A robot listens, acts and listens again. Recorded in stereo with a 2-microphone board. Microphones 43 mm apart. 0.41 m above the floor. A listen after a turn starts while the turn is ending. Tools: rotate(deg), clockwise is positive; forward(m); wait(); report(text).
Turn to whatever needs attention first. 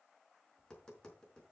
wait()
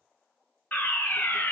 rotate(-45)
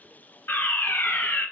rotate(-85)
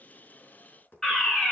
rotate(-15)
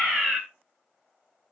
report("Found it: a fire alarm, straight ahead, 2 to 4 m away.")